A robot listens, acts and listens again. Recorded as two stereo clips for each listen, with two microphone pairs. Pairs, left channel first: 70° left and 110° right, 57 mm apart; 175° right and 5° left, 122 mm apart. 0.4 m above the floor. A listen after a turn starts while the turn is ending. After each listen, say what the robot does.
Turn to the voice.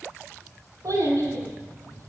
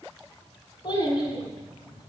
Turn 130° right.
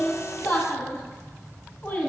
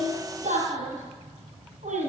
Found it: a child speaking, straight ahead.